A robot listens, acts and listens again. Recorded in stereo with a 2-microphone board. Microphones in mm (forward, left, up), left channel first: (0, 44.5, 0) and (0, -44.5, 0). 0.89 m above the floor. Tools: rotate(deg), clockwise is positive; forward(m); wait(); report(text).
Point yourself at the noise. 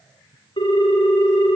rotate(-75)
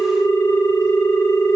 rotate(-30)
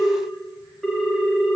report("Found it: a ringtone, straight ahead.")